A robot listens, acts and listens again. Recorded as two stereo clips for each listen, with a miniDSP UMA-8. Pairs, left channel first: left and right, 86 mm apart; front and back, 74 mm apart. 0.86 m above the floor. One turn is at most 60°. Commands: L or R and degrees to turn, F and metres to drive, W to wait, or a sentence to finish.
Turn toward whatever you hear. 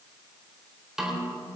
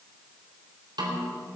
R60
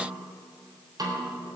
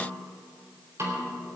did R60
R60
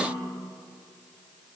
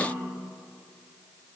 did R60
R60
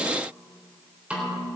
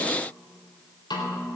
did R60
R15
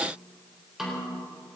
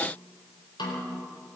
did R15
Found it: a snare drum, straight ahead, 2 to 4 m away.